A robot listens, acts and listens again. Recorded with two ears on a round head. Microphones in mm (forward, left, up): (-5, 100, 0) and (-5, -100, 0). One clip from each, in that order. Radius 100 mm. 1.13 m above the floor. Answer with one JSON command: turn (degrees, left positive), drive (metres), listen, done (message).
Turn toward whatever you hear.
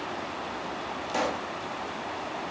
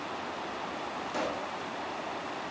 {"turn": 20}
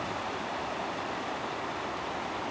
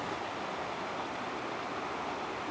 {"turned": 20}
{"listen": true}
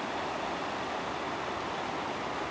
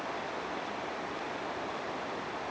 {"done": "I heard a pop, but can't make it out now. It was about straight ahead or 140° left."}